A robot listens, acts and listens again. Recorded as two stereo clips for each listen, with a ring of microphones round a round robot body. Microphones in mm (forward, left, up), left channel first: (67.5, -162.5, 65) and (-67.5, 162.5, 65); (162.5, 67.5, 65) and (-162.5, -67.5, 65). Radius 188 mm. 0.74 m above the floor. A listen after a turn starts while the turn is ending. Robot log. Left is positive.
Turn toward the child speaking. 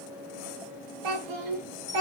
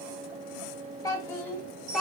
note: The child speaking: 115° left.
cmd yaw +115
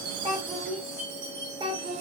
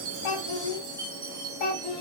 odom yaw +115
note: The child speaking is now 40° left.
cmd yaw +40
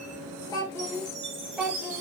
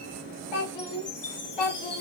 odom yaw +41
note: The child speaking is now 25° left.
cmd yaw +25
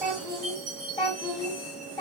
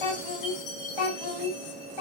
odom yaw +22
note: The child speaking is now 10° left.
cmd yaw +10
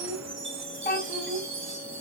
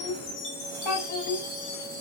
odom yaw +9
end: Facing the child speaking.